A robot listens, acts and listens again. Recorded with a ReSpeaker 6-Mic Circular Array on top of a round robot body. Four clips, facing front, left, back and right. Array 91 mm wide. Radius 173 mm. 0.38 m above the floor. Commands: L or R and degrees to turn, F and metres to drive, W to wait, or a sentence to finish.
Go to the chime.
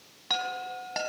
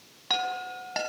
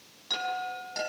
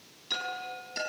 L60
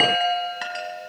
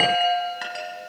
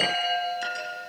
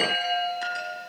L30
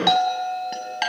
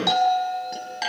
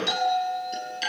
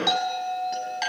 F1.0
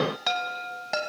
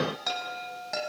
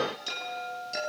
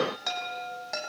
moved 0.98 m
F1.0
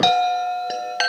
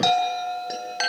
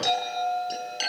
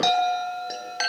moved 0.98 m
F1.0
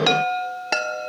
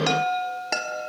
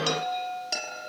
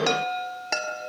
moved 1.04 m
F1.0
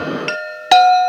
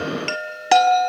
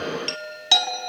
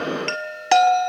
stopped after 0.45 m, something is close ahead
I am next to the chime.